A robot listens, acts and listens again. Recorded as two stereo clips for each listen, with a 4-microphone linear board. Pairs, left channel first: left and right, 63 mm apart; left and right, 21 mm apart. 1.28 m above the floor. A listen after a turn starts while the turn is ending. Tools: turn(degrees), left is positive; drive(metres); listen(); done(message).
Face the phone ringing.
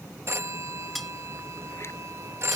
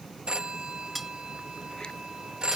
turn(degrees=-45)
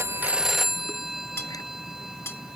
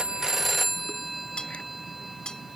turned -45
done("Facing the phone ringing.")